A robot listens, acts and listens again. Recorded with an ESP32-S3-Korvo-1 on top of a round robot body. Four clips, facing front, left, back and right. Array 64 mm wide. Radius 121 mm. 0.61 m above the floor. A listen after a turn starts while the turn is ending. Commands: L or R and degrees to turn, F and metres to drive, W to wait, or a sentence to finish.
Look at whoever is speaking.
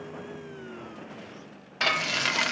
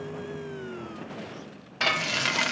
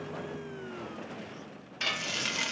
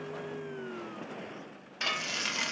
W
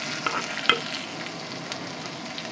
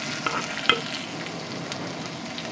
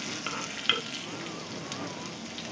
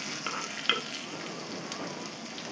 W
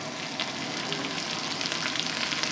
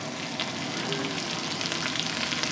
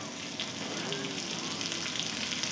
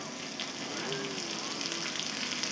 I can't make out anyone speaking to turn to.